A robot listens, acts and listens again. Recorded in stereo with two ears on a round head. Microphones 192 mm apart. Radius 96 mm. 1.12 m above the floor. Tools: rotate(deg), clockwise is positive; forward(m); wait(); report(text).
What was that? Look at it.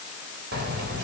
rotate(50)
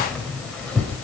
report("Found it: keys jangling, straight ahead, over 4 m away.")